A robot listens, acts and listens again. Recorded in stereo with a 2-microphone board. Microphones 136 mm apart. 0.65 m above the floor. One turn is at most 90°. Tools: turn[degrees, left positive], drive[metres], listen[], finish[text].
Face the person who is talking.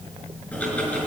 Action: listen[]
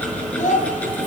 Thought: The child speaking: about 70° left or 110° left.
Action: turn[70]
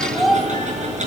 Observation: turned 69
Action: finish[Facing the child speaking.]